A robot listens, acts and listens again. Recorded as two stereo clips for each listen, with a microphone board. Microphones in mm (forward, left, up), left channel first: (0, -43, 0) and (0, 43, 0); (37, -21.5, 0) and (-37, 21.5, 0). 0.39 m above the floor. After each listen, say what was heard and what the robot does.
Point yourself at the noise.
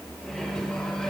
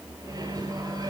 The microwave: 170° right. Turn 170° right.
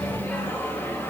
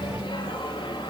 The microwave is now 25° right. Turn 25° right.
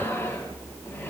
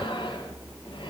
The microwave is now 25° right. Turn 25° right.
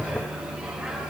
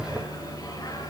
Keep listening.
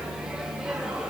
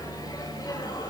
The microwave is now 10° left. Turn 10° left.
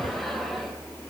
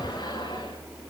Keep listening.
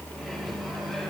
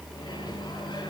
Found it: a microwave, straight ahead, over 4 m away.